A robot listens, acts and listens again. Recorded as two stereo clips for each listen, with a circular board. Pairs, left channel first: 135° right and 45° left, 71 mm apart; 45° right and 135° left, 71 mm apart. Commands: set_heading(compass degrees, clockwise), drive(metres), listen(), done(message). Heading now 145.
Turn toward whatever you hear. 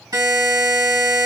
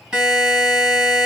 set_heading(85)
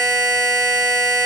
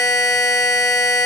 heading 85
done("Found it: a buzzer, straight ahead, 2 to 4 m away.")